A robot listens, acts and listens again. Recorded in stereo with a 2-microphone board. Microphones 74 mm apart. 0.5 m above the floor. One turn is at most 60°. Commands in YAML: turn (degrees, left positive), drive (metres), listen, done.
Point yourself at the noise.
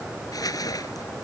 turn: 60
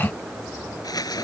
turn: 60
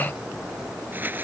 turn: -25
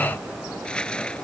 turn: 15
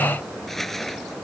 done: "Facing the crumpling."